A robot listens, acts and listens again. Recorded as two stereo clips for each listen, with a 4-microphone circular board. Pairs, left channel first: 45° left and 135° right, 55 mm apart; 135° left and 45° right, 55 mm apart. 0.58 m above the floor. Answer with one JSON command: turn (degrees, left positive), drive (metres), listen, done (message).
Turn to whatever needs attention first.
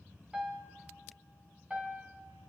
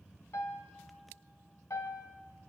{"listen": true}
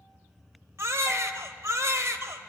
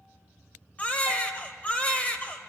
{"turn": -165}
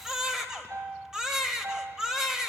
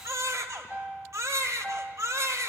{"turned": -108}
{"turn": -55}
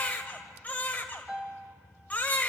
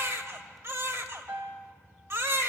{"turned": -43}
{"turn": -15}
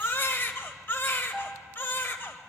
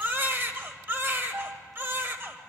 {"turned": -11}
{"done": "Facing the baby crying, 1 to 2 m away."}